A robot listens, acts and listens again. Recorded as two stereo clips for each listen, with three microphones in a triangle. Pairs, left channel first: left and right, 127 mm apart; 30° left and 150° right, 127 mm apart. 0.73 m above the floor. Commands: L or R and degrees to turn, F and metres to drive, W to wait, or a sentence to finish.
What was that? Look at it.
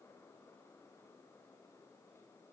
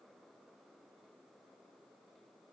W
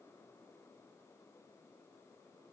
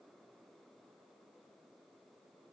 W
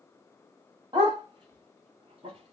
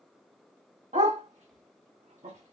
R140
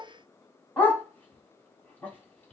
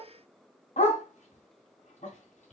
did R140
L15
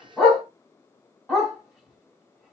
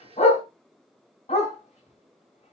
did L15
Facing the dog barking.